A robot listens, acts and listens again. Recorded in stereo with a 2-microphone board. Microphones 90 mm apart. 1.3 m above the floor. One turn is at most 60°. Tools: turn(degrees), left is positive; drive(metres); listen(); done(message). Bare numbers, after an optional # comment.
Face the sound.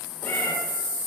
# The cat meowing: about 20° left or 160° left.
turn(20)
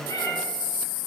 # So it is at 140° left.
turn(60)
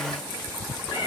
# The cat meowing is now 100° left.
turn(60)
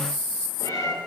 # The cat meowing is now 40° left.
turn(40)
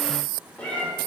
# The cat meowing is now 15° left.
turn(15)
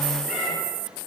done("Facing the cat meowing, 1 to 2 m away.")